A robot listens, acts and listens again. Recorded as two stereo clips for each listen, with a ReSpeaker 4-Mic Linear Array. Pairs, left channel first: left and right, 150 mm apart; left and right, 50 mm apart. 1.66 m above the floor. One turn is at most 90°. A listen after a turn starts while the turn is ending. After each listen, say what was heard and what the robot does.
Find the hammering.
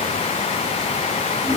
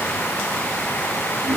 Keep listening.
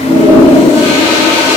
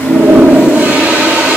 Keep listening.
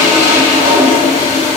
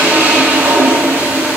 I can't make out hammering to turn to.